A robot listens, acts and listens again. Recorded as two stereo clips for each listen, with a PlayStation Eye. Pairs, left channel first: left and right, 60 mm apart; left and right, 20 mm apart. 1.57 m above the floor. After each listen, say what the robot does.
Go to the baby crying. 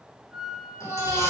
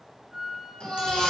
Turn 60° left.
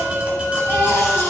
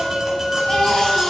Turn 50° left.
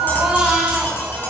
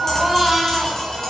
Turn 15° right.
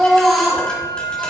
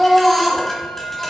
Drive 1.0 m forward.
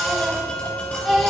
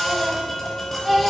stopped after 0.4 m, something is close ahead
Something is in my way. I am facing the baby crying but have not reached it.